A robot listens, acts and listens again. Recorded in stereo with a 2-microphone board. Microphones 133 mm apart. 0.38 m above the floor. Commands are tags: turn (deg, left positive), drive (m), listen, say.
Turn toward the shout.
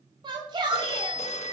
<turn deg="-35"/>
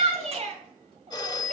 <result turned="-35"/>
<turn deg="-105"/>
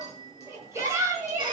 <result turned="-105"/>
<turn deg="-25"/>
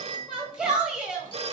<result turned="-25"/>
<turn deg="-10"/>
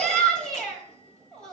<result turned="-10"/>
<say>Facing the shout, 2 to 4 m away.</say>